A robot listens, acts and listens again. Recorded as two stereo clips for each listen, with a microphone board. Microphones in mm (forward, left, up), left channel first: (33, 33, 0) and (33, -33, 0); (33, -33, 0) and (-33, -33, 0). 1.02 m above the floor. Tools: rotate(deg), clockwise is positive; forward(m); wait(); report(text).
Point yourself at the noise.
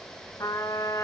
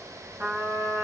rotate(-120)
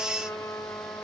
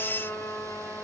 rotate(-55)
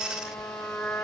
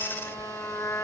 rotate(-45)
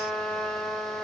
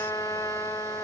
report("Found it: a trumpet, straight ahead, over 4 m away.")